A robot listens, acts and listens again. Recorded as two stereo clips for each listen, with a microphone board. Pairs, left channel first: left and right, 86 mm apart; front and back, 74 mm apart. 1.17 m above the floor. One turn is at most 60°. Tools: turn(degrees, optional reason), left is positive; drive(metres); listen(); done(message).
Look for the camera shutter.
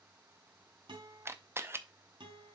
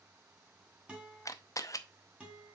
turn(degrees=-35, reason="The camera shutter: 35° right.")
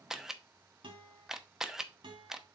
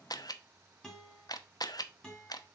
done("Found it: a camera shutter, straight ahead, under 1 m away.")